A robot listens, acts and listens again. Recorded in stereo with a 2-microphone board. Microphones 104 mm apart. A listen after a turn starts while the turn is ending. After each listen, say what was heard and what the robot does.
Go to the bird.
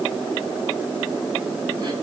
Keep listening.
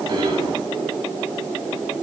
Keep listening.
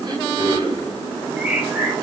Turn 30° right.
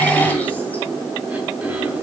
Keep listening.
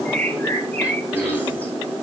So it is at 15° left. Turn 15° left.
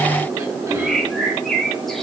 Drive 1.0 m forward.
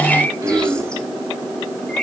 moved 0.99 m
The bird is now 10° left. Turn 10° left.
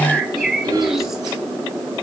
Drive 1.0 m forward.
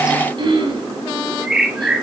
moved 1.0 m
Drive 1.0 m forward.
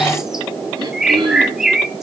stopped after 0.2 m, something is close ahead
Arrived at the bird, straight ahead.